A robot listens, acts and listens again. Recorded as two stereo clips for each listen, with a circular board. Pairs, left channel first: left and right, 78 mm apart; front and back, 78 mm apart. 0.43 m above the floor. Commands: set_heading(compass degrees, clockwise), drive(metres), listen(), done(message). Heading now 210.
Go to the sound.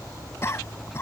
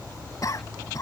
set_heading(170)
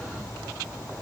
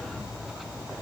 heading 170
listen()
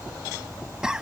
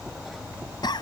set_heading(180)
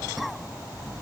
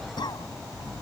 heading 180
drive(1.0)
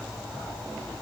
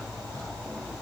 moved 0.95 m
listen()
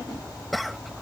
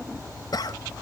drive(1.0)
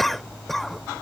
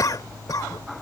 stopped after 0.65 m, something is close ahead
done("I am next to the cough.")